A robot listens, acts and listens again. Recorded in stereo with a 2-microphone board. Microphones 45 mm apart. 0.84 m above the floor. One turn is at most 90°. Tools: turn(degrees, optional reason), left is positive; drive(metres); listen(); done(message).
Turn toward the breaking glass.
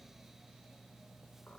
listen()
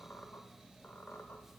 listen()
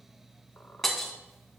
turn(degrees=30)
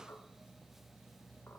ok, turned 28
listen()
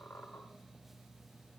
done("I heard breaking glass, but can't make it out now. It was about 25° right or 145° left.")